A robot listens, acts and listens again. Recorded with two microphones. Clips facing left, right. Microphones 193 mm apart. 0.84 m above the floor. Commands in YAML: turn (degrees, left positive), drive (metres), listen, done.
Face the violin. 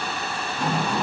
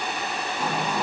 listen: true
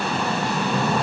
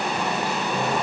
listen: true
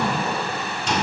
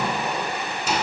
done: "I can't make out a violin to turn to."